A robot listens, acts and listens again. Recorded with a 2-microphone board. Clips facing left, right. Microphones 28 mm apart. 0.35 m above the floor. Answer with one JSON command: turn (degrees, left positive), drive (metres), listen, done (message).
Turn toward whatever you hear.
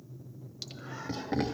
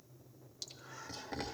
{"turn": 20}
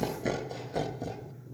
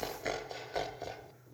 {"turn": -30}
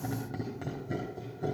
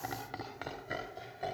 {"turn": -45}
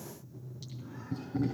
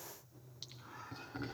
{"turn": -20}
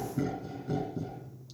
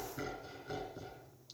{"done": "Facing the laughter, 2 to 4 m away."}